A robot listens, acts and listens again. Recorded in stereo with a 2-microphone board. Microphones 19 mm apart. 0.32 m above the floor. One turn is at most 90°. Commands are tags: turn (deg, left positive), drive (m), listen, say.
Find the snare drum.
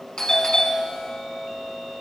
<listen/>
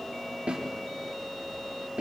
<turn deg="-55"/>
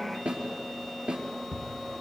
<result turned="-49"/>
<turn deg="-75"/>
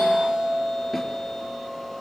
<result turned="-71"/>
<listen/>
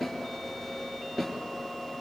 <say>Facing the snare drum.</say>